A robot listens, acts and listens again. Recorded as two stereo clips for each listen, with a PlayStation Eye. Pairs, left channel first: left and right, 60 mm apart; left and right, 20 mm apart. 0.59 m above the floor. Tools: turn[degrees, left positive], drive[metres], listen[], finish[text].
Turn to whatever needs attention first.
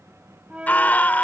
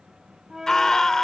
Thought: The scream: about 30° left or 150° left.
Action: turn[30]
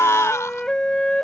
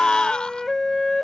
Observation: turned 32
Thought: So it is at 120° left.
Action: turn[120]
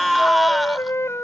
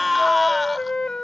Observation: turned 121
Action: finish[Found it: a scream, straight ahead.]